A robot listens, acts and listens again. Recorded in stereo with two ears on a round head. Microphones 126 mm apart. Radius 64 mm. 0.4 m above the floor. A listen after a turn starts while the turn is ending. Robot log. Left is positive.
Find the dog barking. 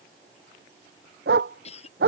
cmd yaw -90
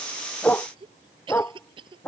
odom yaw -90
note: So it is at 10° left.
cmd yaw +10
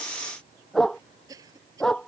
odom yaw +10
end: Facing the dog barking.